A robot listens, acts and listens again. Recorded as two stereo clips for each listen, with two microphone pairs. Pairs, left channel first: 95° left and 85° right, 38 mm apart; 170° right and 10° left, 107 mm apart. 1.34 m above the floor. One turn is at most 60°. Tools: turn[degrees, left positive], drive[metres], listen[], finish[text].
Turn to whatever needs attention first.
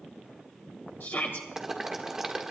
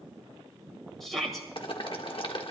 Thought: The shout: 100° left.
Action: turn[60]
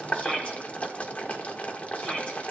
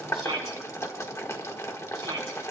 Thought: The shout is now 35° left.
Action: turn[35]
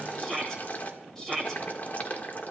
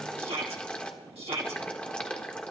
Thought: The shout is now 15° left.
Action: turn[15]
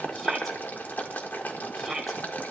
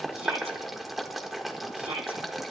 Action: finish[Found it: a shout, straight ahead.]